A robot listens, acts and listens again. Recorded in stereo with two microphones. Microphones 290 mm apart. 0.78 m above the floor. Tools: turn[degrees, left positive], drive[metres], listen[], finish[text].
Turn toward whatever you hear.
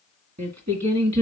Thought: The singing: about 60° right or 120° right.
Action: turn[-60]
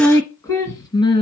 Thought: So it is at 15° left.
Action: turn[15]
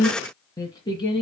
Thought: The singing is now 15° left.
Action: turn[15]
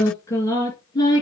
Thought: The singing is now 15° left.
Action: turn[15]
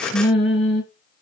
Action: finish[Found it: singing, straight ahead, 2 to 4 m away.]